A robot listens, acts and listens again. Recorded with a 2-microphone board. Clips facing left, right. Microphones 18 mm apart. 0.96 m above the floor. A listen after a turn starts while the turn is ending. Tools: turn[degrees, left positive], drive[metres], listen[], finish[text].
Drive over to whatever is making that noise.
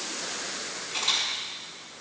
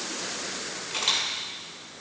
Thought: The camera shutter: about 55° right or 125° right.
Action: turn[-55]
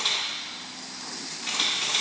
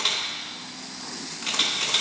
Thought: So it is at 75° right.
Action: turn[-75]
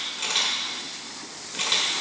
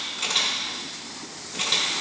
Thought: The camera shutter is now 30° left.
Action: turn[30]
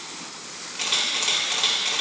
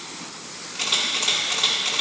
Thought: The camera shutter is now 10° left.
Action: turn[10]
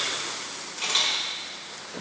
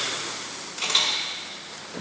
Action: drive[1.0]
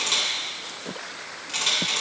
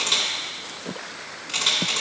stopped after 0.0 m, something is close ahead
Action: finish[Something is in my way. I am facing the camera shutter but have not reached it.]